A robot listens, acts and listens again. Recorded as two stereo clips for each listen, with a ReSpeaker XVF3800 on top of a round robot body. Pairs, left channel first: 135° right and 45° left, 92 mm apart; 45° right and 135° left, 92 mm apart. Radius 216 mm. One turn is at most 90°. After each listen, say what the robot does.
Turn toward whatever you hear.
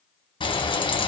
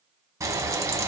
Turn 90° right.
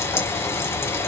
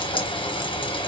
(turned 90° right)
Turn 70° right.
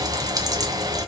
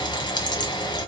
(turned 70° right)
Found it: frying, straight ahead, 1 to 2 m away.